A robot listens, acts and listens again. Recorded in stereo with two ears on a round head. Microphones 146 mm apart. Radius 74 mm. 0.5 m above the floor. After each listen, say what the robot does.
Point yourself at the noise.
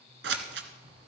Turn 90° right.
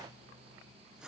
Keep listening.
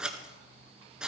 Found it: scissors, straight ahead.